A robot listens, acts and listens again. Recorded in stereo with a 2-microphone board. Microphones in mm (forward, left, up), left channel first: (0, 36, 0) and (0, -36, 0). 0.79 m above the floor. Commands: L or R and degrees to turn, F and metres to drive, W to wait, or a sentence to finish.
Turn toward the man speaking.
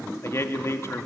L40
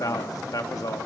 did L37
L90
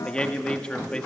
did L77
L15
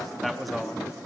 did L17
Found it: a man speaking, straight ahead.